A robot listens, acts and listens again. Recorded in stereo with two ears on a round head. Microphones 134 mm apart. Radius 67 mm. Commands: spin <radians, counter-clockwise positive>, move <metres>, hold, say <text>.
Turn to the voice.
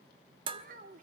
spin -0.96
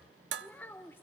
spin 0.26
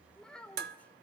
spin 0.17
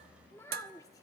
spin 0.35
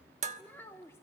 spin 0.26
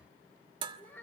spin 0.26
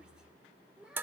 say Facing the child speaking, 1 to 2 m away.